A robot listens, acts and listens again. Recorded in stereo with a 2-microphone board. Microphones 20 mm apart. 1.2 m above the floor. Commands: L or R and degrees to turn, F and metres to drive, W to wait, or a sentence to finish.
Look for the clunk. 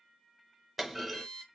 R30
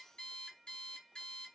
W
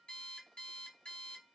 I heard a clunk, but can't make it out now. It was about 20° left or 140° right.